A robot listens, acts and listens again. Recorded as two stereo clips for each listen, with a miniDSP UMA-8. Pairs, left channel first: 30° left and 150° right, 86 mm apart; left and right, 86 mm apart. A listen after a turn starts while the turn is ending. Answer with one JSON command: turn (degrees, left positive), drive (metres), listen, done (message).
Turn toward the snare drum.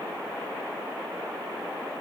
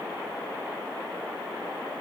{"listen": true}
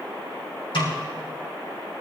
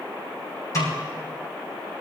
{"turn": 40}
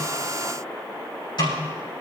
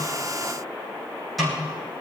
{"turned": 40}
{"done": "Facing the snare drum, over 4 m away."}